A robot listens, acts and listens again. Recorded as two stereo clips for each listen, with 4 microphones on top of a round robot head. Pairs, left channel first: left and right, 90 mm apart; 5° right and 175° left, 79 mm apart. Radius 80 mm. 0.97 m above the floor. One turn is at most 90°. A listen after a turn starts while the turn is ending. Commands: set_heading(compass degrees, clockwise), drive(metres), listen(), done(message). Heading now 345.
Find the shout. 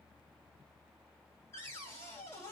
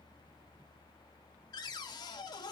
listen()
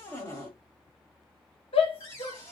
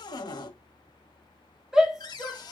set_heading(255)
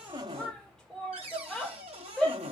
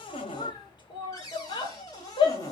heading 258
done("Found it: a shout, straight ahead.")